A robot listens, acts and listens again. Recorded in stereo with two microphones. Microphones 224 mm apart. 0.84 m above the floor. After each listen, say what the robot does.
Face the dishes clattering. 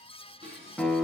Turn 25° right.
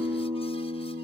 Keep listening.
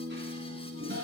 Turn 130° right.
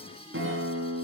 Keep listening.
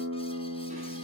Keep listening.
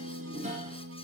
Turn 30° right.
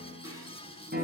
Keep listening.
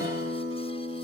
Keep listening.
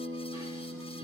I heard dishes clattering from this way, but can't make it out now.